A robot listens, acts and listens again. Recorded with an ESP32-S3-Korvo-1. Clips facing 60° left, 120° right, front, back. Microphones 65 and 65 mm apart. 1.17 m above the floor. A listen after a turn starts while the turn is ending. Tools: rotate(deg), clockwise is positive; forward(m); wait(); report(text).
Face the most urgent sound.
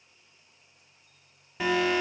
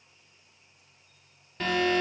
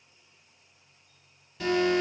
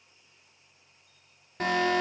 rotate(-140)
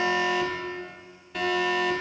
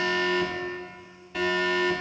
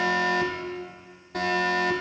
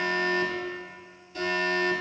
rotate(30)
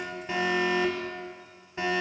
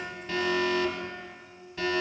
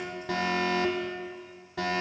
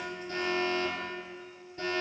rotate(10)
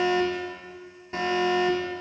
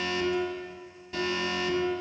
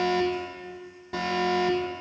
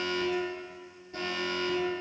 report("Facing the alarm.")